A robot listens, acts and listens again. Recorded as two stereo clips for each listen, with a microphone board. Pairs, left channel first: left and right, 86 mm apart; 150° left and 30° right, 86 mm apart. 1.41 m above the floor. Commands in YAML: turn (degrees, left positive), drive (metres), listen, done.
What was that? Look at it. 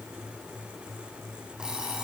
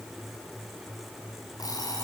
turn: -170
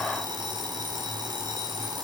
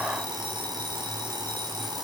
turn: -60
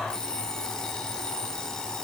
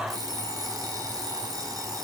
turn: 10
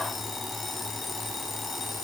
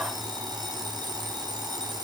done: "Found it: an alarm clock, straight ahead."